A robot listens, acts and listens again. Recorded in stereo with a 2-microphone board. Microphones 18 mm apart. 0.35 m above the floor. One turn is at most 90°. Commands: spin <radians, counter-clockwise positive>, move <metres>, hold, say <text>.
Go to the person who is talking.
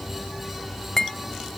hold
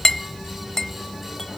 hold
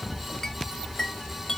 say I can't make out anyone speaking, only a clink.